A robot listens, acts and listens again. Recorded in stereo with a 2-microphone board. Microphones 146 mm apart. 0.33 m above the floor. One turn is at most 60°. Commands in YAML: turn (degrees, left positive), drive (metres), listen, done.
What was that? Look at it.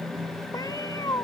turn: 25
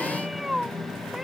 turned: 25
done: "Facing the cat meowing."